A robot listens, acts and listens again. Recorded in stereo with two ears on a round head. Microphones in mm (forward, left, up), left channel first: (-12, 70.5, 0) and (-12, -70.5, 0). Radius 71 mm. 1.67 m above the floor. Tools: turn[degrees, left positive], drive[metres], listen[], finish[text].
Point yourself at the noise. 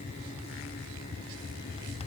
Action: listen[]
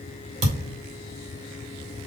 Thought: The thud: about 45° right or 135° right.
Action: turn[-45]
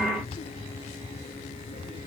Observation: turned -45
Action: listen[]
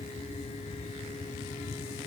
Action: finish[I heard a thud, but can't make it out now. It was about straight ahead or 90° right.]